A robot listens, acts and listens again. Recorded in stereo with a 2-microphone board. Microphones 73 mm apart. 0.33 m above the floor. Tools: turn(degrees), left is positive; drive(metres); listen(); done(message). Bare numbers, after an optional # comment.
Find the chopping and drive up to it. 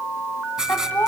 listen()
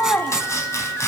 # The chopping: about 40° left or 140° left.
turn(40)
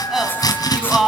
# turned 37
# So it is at 95° left.
turn(95)
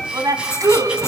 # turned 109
# Nothing new. It was at 15° right.
turn(-15)
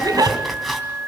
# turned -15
drive(1.0)
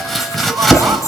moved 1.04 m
drive(1.0)
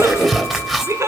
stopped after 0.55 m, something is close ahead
done("Arrived at the chopping, straight ahead.")